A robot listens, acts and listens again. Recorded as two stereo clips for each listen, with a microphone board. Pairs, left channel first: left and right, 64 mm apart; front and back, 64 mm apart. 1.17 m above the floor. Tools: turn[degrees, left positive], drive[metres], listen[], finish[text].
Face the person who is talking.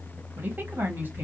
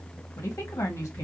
Thought: The woman speaking: 35° right.
Action: turn[-35]
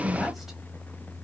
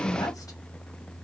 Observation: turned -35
Action: finish[Found it: a woman speaking, straight ahead, 1 to 2 m away.]